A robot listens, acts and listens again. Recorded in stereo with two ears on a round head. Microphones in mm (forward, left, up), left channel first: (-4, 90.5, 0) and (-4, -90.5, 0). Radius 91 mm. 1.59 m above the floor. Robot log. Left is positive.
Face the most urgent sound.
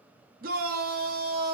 note: The shout: about 45° right or 135° right.
cmd yaw -45
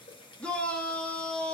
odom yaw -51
end: Facing the shout.